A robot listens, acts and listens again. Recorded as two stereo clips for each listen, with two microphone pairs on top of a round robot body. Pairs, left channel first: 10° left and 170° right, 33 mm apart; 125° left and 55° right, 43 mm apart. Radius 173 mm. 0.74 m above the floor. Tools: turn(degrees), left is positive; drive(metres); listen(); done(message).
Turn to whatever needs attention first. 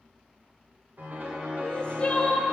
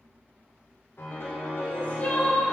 turn(degrees=70)
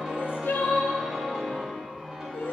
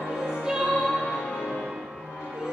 turn(degrees=25)
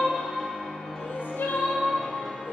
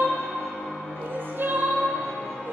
turn(degrees=-10)
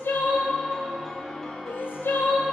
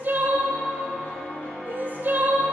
done("Found it: crying, straight ahead, 1 to 2 m away.")